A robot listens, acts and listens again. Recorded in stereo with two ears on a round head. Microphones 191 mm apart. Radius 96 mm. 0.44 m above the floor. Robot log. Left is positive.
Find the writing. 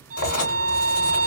cmd yaw +90
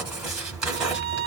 end: Facing the writing.